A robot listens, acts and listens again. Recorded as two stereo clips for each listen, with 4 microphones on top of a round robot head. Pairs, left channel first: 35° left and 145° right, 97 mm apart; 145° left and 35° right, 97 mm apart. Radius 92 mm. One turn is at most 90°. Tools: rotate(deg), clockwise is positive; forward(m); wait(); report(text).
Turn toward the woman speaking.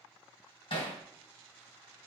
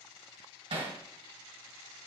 wait()
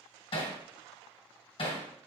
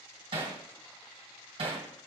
wait()
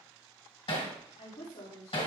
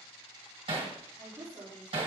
rotate(-35)
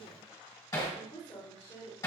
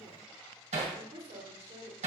rotate(-10)
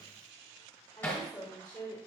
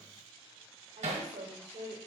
report("Facing the woman speaking, over 4 m away.")